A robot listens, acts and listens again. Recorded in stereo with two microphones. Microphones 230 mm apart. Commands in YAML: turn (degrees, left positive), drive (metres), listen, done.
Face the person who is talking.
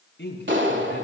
turn: 55
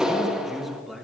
done: "Facing the man speaking, over 4 m away."